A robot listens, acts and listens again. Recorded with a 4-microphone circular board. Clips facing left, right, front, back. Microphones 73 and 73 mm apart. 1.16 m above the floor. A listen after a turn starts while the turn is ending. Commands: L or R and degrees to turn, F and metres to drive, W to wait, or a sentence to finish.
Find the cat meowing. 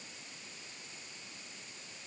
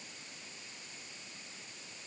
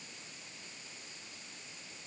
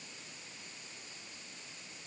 W
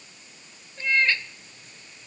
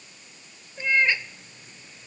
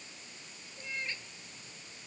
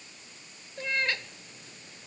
R170
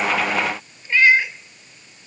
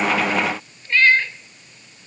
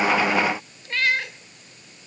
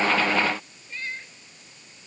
L10
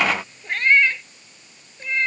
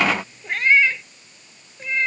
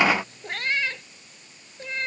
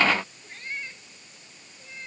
Facing the cat meowing.